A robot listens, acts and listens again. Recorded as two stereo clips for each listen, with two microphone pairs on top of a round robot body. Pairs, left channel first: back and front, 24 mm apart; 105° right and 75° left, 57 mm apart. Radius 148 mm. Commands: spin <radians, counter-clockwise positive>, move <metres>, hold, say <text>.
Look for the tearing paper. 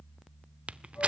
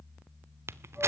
spin 0.61
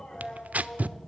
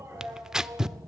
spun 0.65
say Found it: tearing paper, straight ahead.